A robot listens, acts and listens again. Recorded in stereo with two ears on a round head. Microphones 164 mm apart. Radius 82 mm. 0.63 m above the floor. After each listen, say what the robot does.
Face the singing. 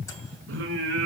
Turn 70° right.
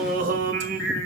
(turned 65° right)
Turn 55° right.
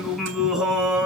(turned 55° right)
Found it: singing, straight ahead, 2 to 4 m away.